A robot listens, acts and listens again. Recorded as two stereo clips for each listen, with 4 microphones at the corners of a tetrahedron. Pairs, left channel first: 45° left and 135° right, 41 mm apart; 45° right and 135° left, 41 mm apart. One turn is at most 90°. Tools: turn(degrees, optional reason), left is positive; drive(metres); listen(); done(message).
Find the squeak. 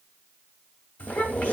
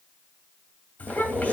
turn(degrees=90, reason="The squeak: 100° left.")
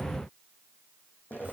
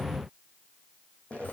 turn(degrees=15, reason="The squeak is now 15° left.")
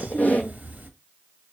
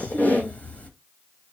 done("Found it: a squeak, straight ahead.")